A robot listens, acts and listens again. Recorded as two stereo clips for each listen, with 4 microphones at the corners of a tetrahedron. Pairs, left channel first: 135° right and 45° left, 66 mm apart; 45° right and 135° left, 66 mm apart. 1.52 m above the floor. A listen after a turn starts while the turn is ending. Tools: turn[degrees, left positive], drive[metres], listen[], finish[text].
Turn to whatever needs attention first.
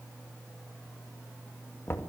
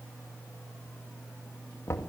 Action: listen[]
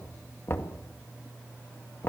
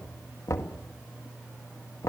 Action: listen[]
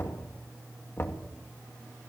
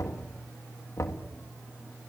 Action: finish[I can't make out anything urgent, only knocking.]